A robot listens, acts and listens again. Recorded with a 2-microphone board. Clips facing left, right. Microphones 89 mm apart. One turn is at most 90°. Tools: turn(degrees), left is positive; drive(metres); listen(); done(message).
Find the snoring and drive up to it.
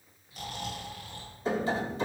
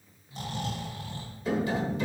turn(degrees=-30)
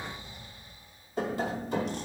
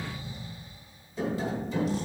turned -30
drive(metres=1.0)
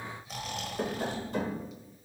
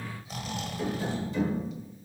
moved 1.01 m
drive(metres=1.0)
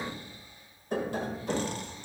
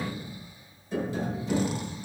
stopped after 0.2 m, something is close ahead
listen()
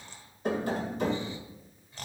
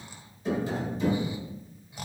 turn(degrees=-10)
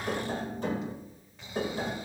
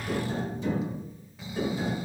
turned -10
done("I am next to the snoring.")